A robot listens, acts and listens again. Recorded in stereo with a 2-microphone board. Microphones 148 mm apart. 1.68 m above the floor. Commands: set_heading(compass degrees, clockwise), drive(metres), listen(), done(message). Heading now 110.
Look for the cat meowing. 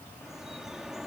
listen()
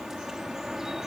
listen()
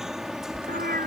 set_heading(185)
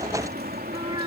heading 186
set_heading(211)
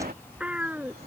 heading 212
set_heading(222)
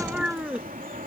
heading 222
done("Found it: a cat meowing, straight ahead.")